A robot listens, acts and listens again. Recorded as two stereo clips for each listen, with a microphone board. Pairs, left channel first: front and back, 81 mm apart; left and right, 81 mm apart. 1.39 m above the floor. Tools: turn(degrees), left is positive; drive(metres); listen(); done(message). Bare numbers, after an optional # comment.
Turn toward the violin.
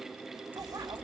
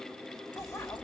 listen()
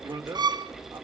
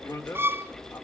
# The violin: 150° right.
turn(-150)
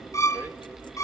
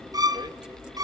# The violin is now 50° right.
turn(-50)
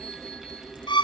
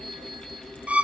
# The violin is now 15° right.
turn(-15)
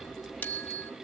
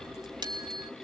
listen()
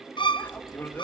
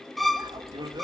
done("Found it: a violin, straight ahead, under 1 m away.")